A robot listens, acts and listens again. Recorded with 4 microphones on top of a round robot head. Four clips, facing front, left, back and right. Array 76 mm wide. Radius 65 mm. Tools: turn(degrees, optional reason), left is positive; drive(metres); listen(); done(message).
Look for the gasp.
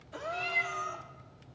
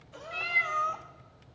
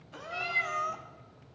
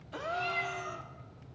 turn(degrees=-80, reason="The gasp: 80° right.")
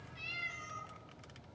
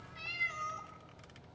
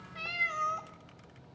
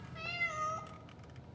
done("I heard a gasp from this way, but can't make it out now.")